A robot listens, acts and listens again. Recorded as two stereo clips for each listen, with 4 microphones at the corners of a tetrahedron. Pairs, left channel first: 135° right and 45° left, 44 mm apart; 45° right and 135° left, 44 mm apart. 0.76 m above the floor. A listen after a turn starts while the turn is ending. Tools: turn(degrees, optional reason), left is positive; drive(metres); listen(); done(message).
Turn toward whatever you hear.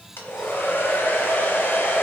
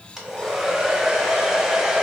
turn(degrees=-145, reason="The hair dryer: 145° right.")
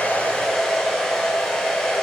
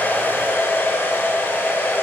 turn(degrees=-55, reason="The hair dryer is now 55° right.")
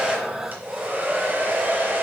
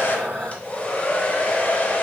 turn(degrees=10, reason="The hair dryer is now 10° left.")
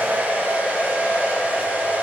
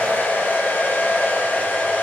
done("Found it: a hair dryer, straight ahead.")